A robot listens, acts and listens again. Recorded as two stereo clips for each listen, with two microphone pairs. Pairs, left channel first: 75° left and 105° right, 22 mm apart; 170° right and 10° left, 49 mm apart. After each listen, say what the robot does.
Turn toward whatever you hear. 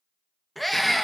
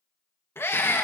Turn 155° left.
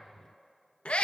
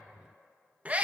Turn 65° left.
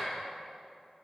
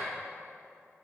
Keep listening.
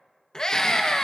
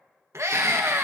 Turn 15° left.
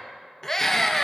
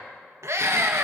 Facing the scream.